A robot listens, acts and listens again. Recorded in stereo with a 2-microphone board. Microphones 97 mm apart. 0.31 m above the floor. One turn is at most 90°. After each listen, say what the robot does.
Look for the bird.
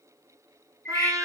Turn 30° left.
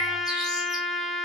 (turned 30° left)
Keep listening.
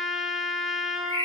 Turn 90° left.
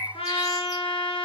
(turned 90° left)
Turn 45° left.
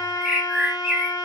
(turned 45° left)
Facing the bird.